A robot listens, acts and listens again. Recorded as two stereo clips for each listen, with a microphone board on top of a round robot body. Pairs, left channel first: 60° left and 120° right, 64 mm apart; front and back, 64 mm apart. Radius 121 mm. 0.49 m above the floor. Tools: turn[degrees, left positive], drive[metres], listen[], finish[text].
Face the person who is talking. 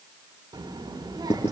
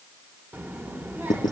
Thought: The child speaking: 120° right.
Action: turn[-120]
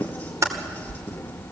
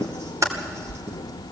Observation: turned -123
Action: finish[Facing the child speaking, 1 to 2 m away.]